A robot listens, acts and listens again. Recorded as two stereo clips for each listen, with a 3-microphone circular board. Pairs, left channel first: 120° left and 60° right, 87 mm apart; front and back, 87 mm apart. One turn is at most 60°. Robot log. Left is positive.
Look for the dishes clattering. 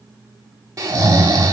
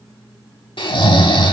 cmd idle
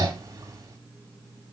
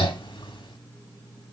cmd idle
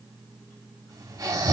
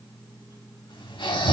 end: I can't make out dishes clattering, only snoring.